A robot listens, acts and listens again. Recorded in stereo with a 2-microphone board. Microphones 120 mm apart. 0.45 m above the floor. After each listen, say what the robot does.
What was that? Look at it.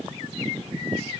Keep listening.
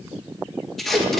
Turn 30° left.
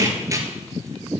Turn 30° right.
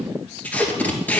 Turn 10° left.
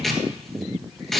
Found it: tape being pulled, straight ahead.